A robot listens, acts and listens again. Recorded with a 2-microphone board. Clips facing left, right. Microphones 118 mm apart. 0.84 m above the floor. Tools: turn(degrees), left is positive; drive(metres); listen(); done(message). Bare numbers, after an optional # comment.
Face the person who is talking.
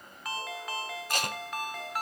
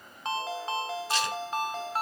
listen()
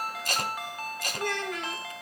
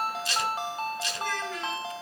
# The child speaking: about 60° left or 120° left.
turn(60)
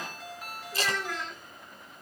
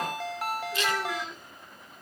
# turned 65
done("Facing the child speaking.")